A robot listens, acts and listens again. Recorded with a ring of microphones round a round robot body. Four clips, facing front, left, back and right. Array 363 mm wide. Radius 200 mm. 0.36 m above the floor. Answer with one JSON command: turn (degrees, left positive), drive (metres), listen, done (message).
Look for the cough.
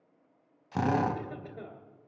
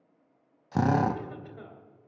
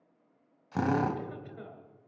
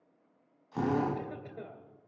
{"turn": -45}
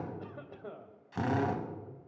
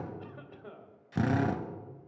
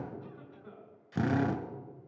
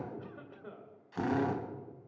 {"turn": -15}
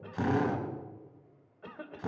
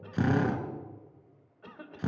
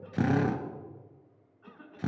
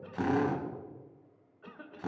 {"turn": -10}
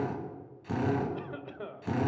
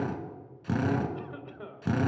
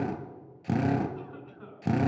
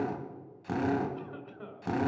{"done": "Facing the cough."}